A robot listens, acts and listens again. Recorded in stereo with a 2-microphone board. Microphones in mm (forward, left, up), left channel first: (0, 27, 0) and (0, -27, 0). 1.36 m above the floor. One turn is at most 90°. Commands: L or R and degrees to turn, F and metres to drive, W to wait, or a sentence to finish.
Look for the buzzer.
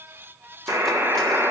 R70
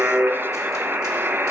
R45
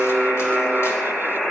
Found it: a buzzer, straight ahead, 1 to 2 m away.